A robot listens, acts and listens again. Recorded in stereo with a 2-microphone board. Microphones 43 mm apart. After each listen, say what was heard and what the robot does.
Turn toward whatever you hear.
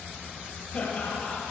The laughter: about 40° left or 140° left. Turn 40° left.
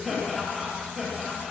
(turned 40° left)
So it is at 10° right. Turn 10° right.
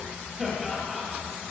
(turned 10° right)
Facing the laughter.